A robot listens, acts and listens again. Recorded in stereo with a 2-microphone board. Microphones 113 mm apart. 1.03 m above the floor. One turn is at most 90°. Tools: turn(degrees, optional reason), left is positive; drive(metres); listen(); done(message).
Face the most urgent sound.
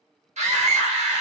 turn(degrees=-70, reason="The scream: about 70° right or 110° right.")
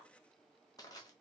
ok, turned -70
listen()
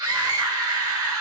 turn(degrees=-35, reason="So it is at 35° right.")
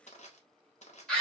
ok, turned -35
turn(degrees=10, reason="The scream is now 10° left.")
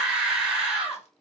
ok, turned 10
done("Facing the scream.")